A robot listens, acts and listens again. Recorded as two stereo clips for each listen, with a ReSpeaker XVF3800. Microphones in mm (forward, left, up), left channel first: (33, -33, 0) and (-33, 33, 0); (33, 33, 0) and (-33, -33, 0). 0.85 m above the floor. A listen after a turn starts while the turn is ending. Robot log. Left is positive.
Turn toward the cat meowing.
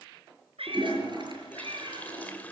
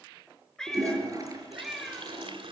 note: The cat meowing: 140° left.
cmd yaw +140
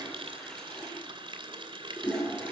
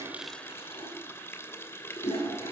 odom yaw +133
cmd idle
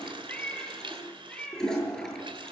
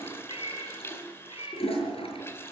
note: The cat meowing is now 35° left.
cmd yaw +35
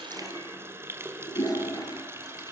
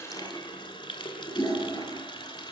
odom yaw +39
cmd idle
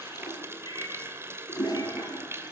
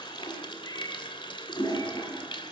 cmd idle
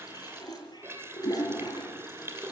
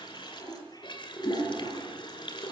end: I heard a cat meowing from this way, but can't make it out now.